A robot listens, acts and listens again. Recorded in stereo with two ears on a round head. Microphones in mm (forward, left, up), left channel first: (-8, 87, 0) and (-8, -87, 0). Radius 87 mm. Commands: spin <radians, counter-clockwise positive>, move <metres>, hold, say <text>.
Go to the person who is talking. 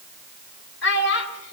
spin 1.05
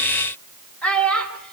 move 1.0
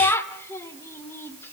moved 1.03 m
spin 0.26
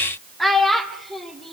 move 1.0
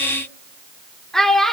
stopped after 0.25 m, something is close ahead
say Arrived at the child speaking, straight ahead.